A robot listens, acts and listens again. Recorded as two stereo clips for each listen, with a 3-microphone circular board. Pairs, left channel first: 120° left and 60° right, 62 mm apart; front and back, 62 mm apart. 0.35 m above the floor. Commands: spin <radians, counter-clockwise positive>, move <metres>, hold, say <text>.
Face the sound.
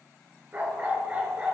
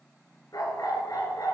spin 0.17
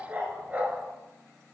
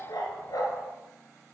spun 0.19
say Facing the dog barking.